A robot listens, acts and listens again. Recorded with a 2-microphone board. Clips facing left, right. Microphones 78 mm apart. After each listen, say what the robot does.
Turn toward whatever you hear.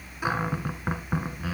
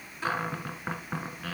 Turn 30° left.
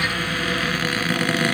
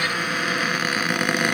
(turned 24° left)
Turn 15° right.
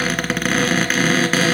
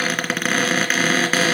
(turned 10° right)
Found it: a cupboard door, straight ahead, 1 to 2 m away.